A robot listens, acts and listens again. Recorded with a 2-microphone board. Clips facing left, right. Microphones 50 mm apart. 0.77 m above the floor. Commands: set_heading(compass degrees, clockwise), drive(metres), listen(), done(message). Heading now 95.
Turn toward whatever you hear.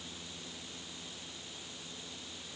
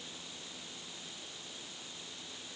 listen()
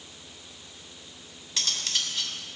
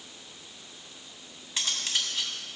set_heading(110)
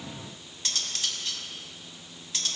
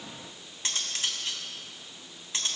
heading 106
set_heading(256)
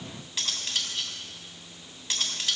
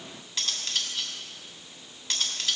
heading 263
done("Facing the cutlery clinking.")